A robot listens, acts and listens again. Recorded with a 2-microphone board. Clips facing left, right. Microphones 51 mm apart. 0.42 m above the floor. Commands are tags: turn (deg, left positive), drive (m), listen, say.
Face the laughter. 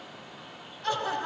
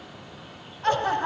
<turn deg="-40"/>
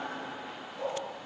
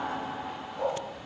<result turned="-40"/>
<turn deg="-110"/>
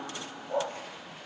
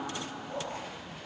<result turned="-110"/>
<turn deg="-15"/>
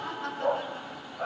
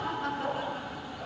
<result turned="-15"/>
<say>Found it: laughter, straight ahead, over 4 m away.</say>